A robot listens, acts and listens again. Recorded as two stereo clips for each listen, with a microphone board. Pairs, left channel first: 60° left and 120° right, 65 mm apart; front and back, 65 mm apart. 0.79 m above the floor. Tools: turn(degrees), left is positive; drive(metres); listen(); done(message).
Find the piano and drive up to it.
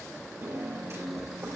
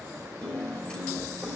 turn(degrees=-75)
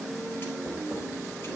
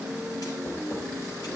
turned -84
turn(degrees=10)
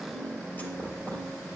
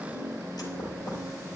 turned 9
drive(metres=1.0)
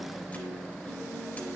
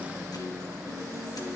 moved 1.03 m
drive(metres=1.0)
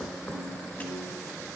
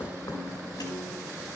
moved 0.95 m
drive(metres=1.0)
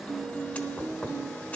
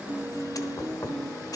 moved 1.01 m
drive(metres=1.0)
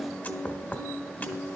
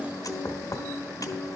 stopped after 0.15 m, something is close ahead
done("Arrived at the piano, straight ahead.")